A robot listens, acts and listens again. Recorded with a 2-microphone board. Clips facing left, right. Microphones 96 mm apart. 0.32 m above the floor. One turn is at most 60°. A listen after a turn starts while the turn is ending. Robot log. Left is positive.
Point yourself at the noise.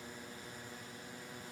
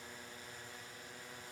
cmd idle
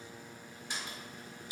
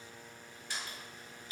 note: The door slam: about 20° left or 160° left.
cmd yaw +20
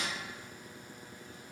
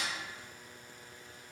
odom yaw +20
cmd idle
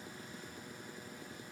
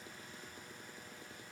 end: I heard a door slam, but can't make it out now. It was about straight ahead or 140° left.